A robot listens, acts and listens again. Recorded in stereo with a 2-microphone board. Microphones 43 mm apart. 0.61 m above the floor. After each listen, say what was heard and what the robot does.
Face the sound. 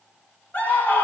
The scream: about 40° left or 140° left. Turn 40° left.
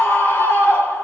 So it is at 95° left. Turn 95° left.
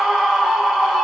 Found it: a scream, straight ahead, 1 to 2 m away.